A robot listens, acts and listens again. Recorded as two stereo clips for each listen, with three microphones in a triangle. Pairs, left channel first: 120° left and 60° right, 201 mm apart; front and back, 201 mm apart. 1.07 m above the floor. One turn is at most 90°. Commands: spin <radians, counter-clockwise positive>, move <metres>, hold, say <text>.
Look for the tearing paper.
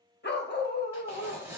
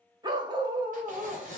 spin -1.57
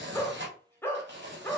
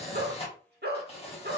spin -0.96
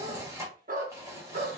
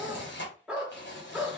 spin 0.17
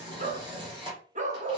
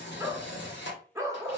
say Found it: tearing paper, straight ahead.